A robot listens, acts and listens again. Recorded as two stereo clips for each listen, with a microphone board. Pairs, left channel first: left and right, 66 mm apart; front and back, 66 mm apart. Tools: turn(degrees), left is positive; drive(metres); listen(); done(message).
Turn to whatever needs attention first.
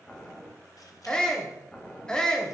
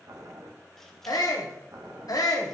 turn(degrees=15)
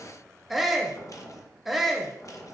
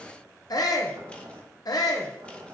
done("Facing the shout.")